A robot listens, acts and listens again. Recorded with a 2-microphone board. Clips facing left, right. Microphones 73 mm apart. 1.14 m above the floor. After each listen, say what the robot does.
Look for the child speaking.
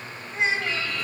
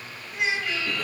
Turn 30° left.
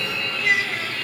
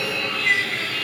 Found it: a child speaking, straight ahead.